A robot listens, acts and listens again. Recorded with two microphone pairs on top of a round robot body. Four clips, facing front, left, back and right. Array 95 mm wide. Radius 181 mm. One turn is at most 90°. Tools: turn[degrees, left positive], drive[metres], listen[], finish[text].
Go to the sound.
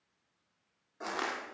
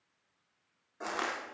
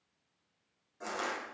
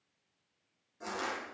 Thought: The crushing: 60° left.
Action: turn[60]
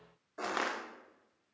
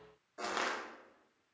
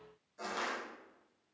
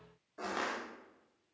Action: drive[1.0]
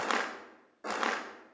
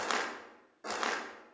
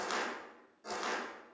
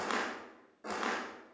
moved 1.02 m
Thought: The crushing is now 10° left.
Action: turn[10]
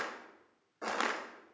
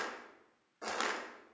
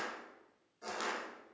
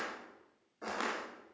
Action: drive[1.0]
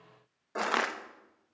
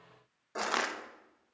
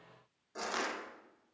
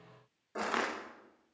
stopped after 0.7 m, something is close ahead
Thought: The crushing is now 10° left.
Action: turn[10]
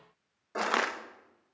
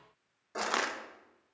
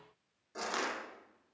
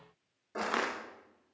Action: finish[I am next to the crushing.]